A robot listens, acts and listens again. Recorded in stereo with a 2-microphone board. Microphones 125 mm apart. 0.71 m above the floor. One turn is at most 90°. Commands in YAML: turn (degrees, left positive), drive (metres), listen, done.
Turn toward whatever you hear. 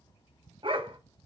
turn: -45
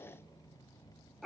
done: "Facing the dog barking, 1 to 2 m away."